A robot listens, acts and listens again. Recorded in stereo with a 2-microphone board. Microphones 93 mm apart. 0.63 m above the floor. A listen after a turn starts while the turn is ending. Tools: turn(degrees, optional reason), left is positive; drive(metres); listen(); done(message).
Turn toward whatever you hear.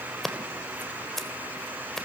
turn(degrees=30)
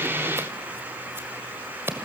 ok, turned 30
turn(degrees=-25, reason="So it is at 25° right.")
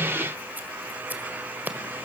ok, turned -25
turn(degrees=-20, reason="The scissors is now 20° right.")
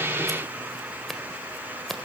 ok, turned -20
done("Facing the scissors, 1 to 2 m away.")